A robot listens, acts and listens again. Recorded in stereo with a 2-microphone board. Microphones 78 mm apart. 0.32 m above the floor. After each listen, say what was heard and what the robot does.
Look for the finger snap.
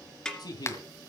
The finger snap: about 35° left or 145° left. Turn 35° left.
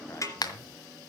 So it is at 100° left. Turn 100° left.
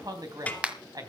The finger snap is now 20° right. Turn 20° right.
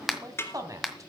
Facing the finger snap, 1 to 2 m away.